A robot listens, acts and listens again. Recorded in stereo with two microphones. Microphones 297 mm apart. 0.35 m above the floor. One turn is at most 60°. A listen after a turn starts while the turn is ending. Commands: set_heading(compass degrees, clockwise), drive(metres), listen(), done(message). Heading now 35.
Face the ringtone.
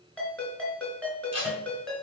set_heading(5)
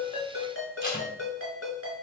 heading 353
set_heading(293)
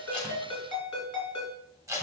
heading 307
set_heading(247)
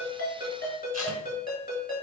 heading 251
set_heading(221)
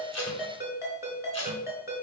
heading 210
set_heading(220)
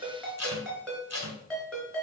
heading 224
done("Found it: a ringtone, straight ahead, 2 to 4 m away.")